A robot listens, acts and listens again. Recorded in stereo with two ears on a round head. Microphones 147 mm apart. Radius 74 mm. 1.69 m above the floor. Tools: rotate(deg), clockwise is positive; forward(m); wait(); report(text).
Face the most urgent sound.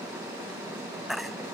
rotate(-30)
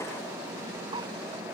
wait()
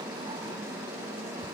wait()
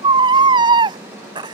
rotate(30)
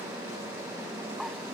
wait()
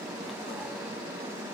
wait()
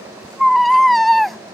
report("Found it: a baby crying, straight ahead.")